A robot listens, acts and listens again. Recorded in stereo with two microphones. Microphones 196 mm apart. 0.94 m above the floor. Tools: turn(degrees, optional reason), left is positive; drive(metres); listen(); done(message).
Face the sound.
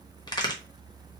turn(degrees=20, reason="The crack: about 20° left or 160° left.")
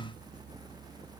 listen()
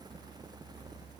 done("I heard a crack, but can't make it out now. It was about straight ahead or 140° left.")